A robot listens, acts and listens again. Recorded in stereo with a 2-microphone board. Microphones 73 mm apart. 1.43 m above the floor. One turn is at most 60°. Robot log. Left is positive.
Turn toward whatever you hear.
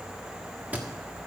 note: The thud: about 25° right or 155° right.
cmd yaw -25
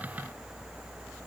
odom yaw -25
cmd idle
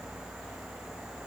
end: I heard a thud, but can't make it out now. It was about straight ahead or 130° right.